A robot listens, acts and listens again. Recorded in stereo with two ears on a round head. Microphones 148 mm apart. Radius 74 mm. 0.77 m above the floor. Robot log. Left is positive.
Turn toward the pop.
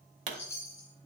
note: The pop: about 45° right or 135° right.
cmd yaw -45
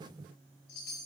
cmd idle
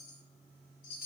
end: I heard a pop, but can't make it out now. It was about straight ahead or 90° right.